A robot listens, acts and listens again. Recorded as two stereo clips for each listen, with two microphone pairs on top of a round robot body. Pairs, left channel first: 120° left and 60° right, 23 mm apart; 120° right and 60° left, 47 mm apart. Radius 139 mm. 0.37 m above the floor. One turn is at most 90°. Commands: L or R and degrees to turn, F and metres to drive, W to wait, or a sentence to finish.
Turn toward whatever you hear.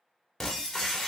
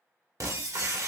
L45
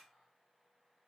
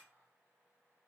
I heard breaking glass from this way, but can't make it out now.